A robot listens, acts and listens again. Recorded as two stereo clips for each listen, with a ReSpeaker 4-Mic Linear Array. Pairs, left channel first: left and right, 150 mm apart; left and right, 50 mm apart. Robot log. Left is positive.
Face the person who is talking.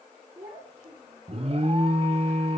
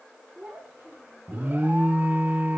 note: The child speaking: about 75° right or 105° right.
cmd yaw -75
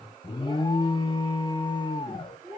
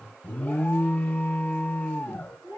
note: So it is at 30° right.
cmd yaw -30
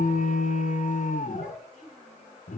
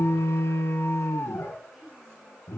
end: Found it: a child speaking, straight ahead.